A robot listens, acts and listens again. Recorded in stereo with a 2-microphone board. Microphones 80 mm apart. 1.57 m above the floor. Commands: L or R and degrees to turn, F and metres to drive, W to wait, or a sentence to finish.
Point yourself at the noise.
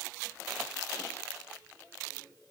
W
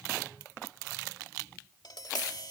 L65
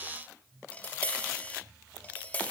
L25
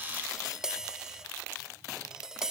R10
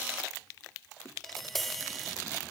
Found it: tapping, straight ahead.